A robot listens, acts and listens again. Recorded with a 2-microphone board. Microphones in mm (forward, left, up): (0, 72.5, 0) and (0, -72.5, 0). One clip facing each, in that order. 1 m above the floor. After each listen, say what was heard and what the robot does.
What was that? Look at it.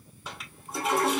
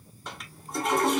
Turn 30° left.
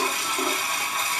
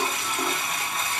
So it is at 150° left. Turn 150° left.
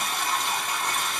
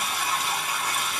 Facing the toilet flushing, 1 to 2 m away.